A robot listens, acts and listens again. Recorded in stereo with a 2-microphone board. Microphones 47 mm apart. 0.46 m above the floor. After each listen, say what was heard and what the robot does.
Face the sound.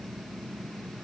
Keep listening.
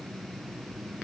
Keep listening.
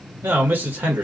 The man speaking: about 45° right or 135° right. Turn 45° right.
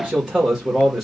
So it is at 10° right. Turn 10° right.
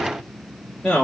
The man speaking is now 15° left. Turn 15° left.
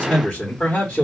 The man speaking is now 20° left. Turn 20° left.
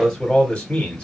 The man speaking is now 15° left. Turn 15° left.
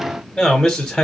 The man speaking is now 10° left. Turn 10° left.
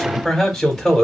Facing the man speaking, 1 to 2 m away.